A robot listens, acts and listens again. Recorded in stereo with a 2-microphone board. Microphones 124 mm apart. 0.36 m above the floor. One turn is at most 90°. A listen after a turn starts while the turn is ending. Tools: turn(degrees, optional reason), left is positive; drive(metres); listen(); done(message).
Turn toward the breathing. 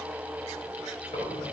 turn(degrees=60, reason="The breathing: about 60° left or 120° left.")
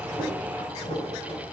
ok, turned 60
turn(degrees=60, reason="So it is at 60° left.")
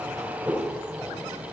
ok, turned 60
done("Found it: breathing, straight ahead, over 4 m away.")